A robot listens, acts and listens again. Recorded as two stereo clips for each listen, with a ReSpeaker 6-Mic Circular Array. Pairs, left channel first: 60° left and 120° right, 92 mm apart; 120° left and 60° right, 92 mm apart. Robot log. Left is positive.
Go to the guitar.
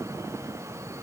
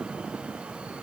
cmd idle
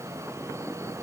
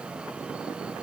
cmd idle
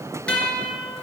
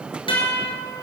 note: The guitar: 135° left.
cmd yaw +135
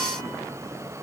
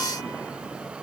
cmd idle
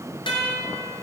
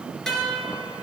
note: The guitar is now 35° left.
cmd yaw +35
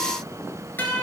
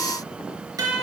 note: The guitar is now 10° right.
cmd yaw -10
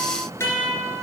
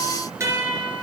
cmd fwd 1.0
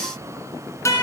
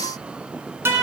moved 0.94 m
cmd fwd 1.0
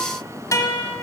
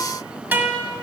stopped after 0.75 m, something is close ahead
note: The guitar is now 10° left.
cmd yaw +10
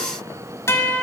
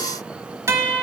end: I am next to the guitar.